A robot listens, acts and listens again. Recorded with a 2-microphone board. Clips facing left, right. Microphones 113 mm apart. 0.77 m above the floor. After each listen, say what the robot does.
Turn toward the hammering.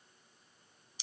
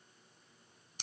Keep listening.
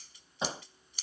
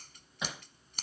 Turn 30° left.
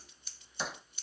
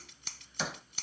Found it: hammering, straight ahead.